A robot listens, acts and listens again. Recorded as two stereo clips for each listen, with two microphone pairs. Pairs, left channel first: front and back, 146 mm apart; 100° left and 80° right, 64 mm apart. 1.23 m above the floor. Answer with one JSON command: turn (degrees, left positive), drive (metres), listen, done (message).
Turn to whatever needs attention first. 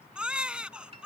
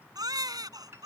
{"turn": -95}
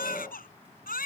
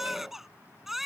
{"done": "Found it: a baby crying, straight ahead."}